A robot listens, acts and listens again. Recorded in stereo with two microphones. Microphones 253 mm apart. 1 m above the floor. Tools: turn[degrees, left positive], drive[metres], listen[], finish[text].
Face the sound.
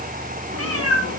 Thought: The cat meowing: about 65° right or 115° right.
Action: turn[-65]
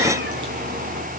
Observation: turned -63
Action: listen[]
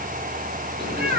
Thought: So it is at 35° right.
Action: turn[-35]
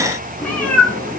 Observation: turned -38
Action: finish[Facing the cat meowing, over 4 m away.]